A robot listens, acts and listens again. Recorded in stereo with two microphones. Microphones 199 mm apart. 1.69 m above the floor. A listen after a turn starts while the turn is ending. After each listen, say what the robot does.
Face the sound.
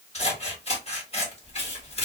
Turn 30° left.
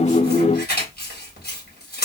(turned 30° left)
Turn 110° left.
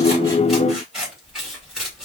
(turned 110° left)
Facing the scissors, 1 to 2 m away.